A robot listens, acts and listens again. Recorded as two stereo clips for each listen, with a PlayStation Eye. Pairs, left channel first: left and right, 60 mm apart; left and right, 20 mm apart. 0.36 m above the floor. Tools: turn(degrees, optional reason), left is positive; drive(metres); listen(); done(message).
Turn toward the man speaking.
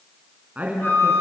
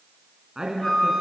turn(degrees=-25, reason="The man speaking: about 25° right or 155° right.")
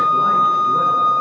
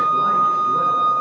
listen()
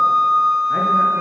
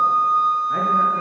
listen()
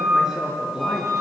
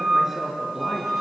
turn(degrees=-10, reason="So it is at 10° right.")
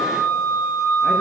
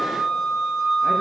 listen()
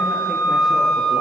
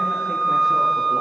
listen()
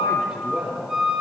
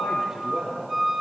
done("Found it: a man speaking, straight ahead, over 4 m away.")